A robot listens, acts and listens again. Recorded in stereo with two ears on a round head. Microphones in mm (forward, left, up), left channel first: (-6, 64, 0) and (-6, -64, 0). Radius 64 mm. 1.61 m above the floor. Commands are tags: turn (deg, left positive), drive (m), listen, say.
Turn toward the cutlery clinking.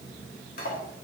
<turn deg="65"/>
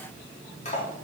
<turn deg="45"/>
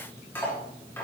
<turn deg="15"/>
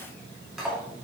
<say>Facing the cutlery clinking.</say>